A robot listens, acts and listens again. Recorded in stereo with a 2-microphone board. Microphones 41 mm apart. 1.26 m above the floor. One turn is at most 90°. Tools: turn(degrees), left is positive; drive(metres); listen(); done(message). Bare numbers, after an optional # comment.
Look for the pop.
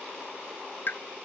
# The pop: about 50° left or 130° left.
turn(50)
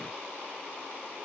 listen()
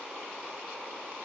done("I heard a pop, but can't make it out now. It was about straight ahead or 80° left.")